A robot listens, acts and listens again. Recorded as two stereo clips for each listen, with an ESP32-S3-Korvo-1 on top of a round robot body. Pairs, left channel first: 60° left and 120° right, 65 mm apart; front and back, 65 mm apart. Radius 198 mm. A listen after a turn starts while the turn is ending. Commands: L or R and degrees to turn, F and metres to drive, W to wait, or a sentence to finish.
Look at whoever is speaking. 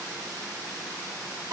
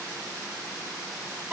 W
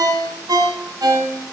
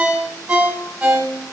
W
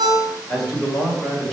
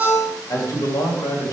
R25
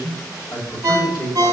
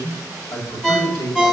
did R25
L10
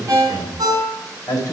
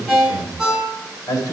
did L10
L15
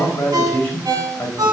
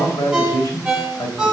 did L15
Facing the man speaking, 2 to 4 m away.